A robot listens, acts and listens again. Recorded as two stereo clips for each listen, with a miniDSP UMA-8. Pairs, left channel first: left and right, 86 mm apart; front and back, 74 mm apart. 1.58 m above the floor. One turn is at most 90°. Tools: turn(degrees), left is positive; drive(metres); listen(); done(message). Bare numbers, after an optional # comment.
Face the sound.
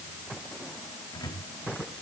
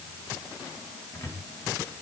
# The cupboard door: 50° left.
turn(50)
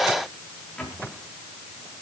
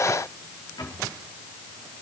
# The cupboard door is now 10° left.
turn(10)
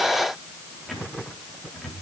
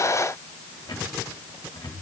done("Facing the cupboard door.")